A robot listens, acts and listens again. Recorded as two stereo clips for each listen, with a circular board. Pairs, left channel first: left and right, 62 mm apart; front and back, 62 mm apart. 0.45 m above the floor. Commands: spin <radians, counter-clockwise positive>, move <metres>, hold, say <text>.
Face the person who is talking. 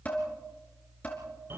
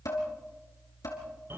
hold
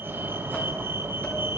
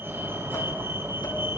hold
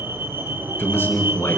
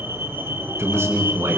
spin 2.44
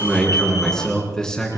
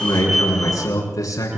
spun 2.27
spin 0.17
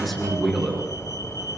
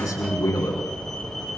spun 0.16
say Found it: a man speaking, straight ahead.